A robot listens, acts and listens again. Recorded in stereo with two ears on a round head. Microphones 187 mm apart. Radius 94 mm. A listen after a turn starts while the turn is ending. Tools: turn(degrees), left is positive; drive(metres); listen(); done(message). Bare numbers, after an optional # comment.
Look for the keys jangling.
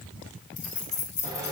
# The keys jangling: about 35° left or 145° left.
turn(35)
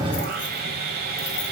listen()
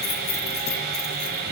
# So it is at 130° left.
turn(130)
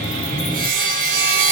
listen()
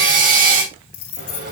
# The keys jangling is now 75° left.
turn(75)
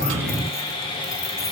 listen()
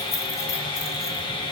listen()
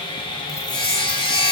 done("Facing where the keys jangling came from. I can't hear it now.")